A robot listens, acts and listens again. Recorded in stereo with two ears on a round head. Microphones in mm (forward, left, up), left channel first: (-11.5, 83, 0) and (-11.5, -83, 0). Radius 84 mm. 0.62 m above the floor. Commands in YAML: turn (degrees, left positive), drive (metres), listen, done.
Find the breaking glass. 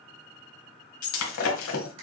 turn: 90
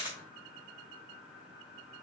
done: "Facing where the breaking glass came from. I can't hear it now."